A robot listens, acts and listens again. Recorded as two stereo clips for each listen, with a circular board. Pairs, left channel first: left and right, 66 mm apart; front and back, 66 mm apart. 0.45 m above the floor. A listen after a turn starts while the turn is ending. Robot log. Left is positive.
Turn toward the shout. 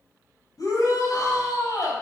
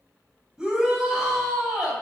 note: The shout: 100° left.
cmd yaw +100
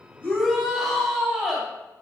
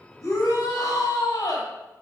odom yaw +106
end: Facing the shout, 2 to 4 m away.